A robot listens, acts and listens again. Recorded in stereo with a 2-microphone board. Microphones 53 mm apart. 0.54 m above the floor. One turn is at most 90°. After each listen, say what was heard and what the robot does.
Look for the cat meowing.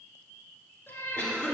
The cat meowing: about 40° left or 140° left. Turn 40° left.
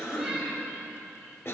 Keep listening.
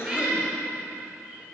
So it is at 10° right. Turn 10° right.
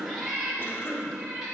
The cat meowing is now 10° right. Turn 10° right.
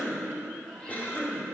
Keep listening.
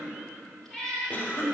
Found it: a cat meowing, straight ahead.